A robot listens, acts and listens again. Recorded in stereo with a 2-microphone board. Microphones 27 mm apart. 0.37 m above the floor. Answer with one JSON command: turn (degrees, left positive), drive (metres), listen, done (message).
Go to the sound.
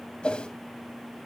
{"turn": 45}
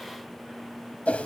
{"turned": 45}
{"turn": 85}
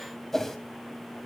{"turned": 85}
{"turn": 15}
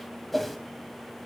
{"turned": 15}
{"drive": 1.0}
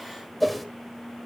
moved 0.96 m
{"drive": 1.0}
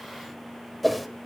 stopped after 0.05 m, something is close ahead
{"done": "I am next to the whoosh."}